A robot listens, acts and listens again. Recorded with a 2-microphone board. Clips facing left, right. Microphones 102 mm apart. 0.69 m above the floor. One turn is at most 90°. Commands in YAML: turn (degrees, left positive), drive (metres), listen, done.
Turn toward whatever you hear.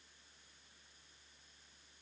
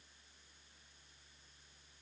listen: true
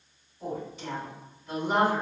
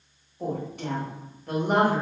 turn: -55
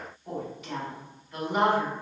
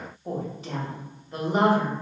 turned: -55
turn: -40
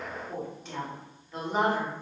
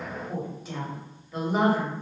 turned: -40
done: "Found it: a woman speaking, straight ahead."